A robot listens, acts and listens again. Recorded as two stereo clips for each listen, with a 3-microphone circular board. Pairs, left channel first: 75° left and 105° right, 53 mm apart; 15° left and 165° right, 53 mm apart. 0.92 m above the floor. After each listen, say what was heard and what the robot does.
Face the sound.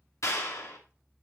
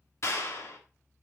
The clap: 50° left. Turn 50° left.
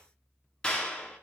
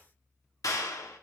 Found it: a clap, straight ahead, 1 to 2 m away.